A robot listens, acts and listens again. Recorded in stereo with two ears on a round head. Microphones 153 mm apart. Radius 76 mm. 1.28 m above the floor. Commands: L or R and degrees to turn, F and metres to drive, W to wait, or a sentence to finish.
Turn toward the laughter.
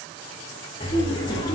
L25
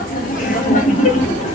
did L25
L140
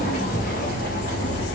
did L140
L65
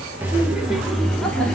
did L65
Facing the laughter.